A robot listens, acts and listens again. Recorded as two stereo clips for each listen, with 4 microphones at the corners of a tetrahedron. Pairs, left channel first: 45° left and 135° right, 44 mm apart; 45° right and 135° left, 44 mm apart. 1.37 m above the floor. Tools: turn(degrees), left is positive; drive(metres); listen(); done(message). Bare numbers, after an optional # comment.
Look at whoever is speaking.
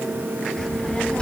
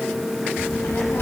# The child speaking: 25° right.
turn(-25)
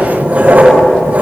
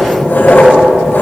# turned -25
listen()
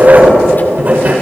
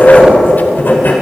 listen()
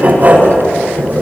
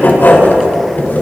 done("Facing where the child speaking came from. I can't hear it now.")